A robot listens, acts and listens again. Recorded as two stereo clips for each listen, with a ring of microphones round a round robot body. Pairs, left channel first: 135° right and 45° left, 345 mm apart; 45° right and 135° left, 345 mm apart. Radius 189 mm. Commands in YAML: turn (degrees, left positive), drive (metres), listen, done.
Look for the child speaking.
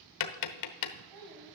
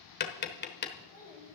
turn: 25
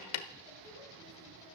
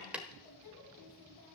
done: "Found it: a child speaking, straight ahead, over 4 m away."